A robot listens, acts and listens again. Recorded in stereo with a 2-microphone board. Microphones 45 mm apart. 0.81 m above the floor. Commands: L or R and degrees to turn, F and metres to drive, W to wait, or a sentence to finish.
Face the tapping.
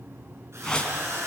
W
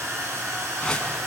W
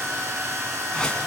I can't make out tapping to turn to.